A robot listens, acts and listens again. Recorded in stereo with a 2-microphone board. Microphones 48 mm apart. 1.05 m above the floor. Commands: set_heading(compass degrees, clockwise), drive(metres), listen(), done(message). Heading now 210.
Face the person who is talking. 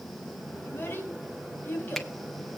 set_heading(165)
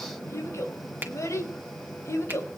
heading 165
set_heading(60)
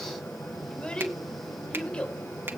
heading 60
set_heading(40)
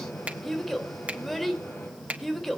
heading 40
done("Found it: a child speaking, straight ahead, 2 to 4 m away.")